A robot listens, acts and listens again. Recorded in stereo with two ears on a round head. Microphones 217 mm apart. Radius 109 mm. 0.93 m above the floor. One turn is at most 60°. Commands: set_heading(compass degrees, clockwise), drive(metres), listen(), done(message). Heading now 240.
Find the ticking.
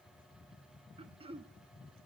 listen()
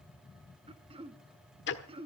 set_heading(190)
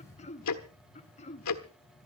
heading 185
set_heading(125)
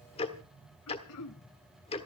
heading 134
set_heading(109)
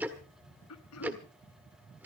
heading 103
done("Found it: ticking, straight ahead, 1 to 2 m away.")